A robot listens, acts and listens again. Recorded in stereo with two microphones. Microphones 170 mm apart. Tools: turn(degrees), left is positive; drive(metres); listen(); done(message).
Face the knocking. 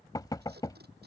turn(degrees=25)
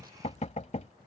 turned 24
turn(degrees=130)
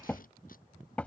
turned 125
turn(degrees=10)
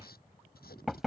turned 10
done("Found it: knocking, straight ahead.")